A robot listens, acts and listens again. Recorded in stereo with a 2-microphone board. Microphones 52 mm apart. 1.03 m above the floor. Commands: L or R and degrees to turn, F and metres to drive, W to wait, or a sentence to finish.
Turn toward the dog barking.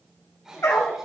L90
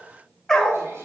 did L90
L10
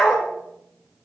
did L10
L10
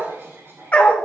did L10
L30
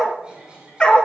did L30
L20
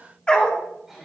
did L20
L20
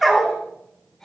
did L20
Found it: a dog barking, straight ahead, 1 to 2 m away.